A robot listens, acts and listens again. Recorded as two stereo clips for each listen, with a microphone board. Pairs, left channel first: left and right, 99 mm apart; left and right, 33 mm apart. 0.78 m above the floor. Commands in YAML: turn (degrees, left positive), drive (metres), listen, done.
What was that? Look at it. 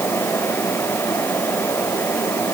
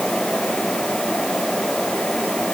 listen: true
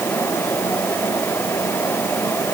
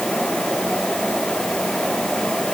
listen: true
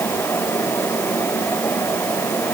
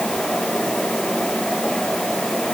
done: "I can't make out anything."